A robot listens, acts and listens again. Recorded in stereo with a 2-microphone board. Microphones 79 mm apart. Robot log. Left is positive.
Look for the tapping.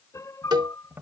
note: The tapping: about 25° right or 155° right.
cmd yaw -25
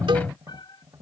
note: So it is at 130° right.
cmd yaw -130
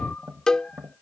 note: The tapping is now 30° right.
cmd yaw -30
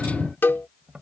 note: The tapping is now 10° right.
cmd yaw -10
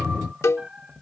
end: Facing the tapping.